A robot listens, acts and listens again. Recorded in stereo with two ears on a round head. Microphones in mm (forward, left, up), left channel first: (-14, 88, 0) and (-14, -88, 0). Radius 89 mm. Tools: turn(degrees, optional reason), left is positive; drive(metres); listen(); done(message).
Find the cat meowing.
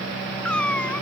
turn(degrees=30)
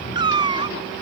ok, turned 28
turn(degrees=-25, reason="So it is at 25° right.")
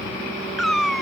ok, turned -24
done("Found it: a cat meowing, straight ahead.")